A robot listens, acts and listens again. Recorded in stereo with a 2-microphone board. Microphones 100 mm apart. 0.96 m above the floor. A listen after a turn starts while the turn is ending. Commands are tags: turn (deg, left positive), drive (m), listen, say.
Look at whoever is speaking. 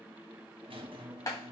<listen/>
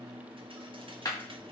<listen/>
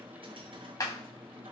<say>I can't make out anyone speaking, only a squeak and a clap.</say>